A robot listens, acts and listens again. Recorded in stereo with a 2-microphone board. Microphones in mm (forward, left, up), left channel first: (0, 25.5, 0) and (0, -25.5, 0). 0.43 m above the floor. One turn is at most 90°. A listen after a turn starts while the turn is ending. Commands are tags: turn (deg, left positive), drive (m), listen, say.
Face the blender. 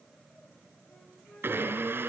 <turn deg="-50"/>
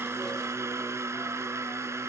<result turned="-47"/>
<turn deg="-80"/>
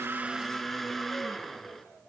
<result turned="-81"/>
<say>Found it: a blender, straight ahead.</say>